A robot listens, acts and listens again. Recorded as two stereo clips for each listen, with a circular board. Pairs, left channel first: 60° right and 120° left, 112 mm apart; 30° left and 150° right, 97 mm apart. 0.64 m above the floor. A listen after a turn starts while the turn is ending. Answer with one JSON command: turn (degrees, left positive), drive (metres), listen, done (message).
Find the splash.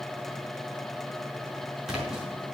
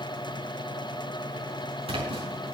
{"turn": -155}
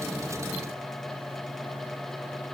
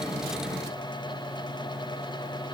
{"done": "I heard a splash from this way, but can't make it out now."}